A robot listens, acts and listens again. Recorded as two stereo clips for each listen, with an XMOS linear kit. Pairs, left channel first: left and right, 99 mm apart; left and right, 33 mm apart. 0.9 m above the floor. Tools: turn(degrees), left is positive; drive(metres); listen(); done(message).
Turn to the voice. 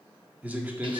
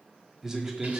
turn(degrees=-15)
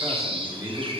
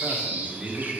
turn(degrees=-150)
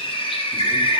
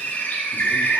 listen()
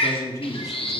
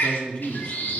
turn(degrees=35)
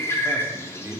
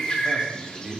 turn(degrees=-25)
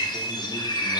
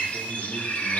listen()
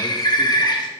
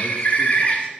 listen()
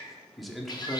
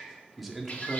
done("Found it: a man speaking, straight ahead, 1 to 2 m away.")